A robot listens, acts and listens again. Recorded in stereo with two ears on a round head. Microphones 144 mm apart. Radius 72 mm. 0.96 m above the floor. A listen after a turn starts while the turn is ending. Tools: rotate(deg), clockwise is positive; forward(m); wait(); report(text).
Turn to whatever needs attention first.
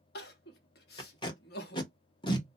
rotate(-70)
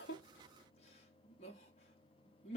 rotate(-40)
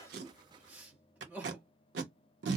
rotate(10)
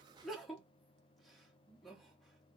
report("Found it: crying, straight ahead, under 1 m away.")